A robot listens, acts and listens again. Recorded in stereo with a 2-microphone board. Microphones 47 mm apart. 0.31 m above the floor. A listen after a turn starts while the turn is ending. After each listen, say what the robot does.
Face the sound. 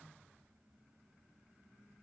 Keep listening.
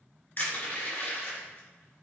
Turn 45° left.
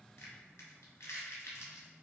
Turn 90° left.
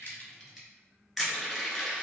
Found it: crushing, straight ahead.